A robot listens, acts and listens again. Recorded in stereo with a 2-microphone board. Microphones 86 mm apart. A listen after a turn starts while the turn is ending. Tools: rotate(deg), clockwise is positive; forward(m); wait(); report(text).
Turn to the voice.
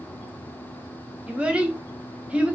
rotate(30)
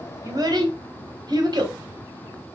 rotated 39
rotate(130)
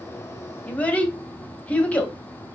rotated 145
rotate(-15)
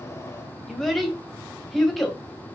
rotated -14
report("Facing the child speaking, under 1 m away.")